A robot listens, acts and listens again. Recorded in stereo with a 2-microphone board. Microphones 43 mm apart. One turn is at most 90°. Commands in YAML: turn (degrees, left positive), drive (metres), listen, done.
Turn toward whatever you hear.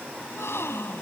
turn: 90
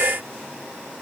done: "I heard a gasp from this way, but can't make it out now."